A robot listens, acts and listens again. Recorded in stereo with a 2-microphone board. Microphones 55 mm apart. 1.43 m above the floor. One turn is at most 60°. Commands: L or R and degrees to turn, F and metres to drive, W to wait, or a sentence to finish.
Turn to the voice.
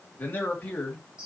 L30
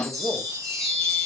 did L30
L60
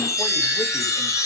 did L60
L60
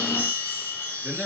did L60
Facing the man speaking.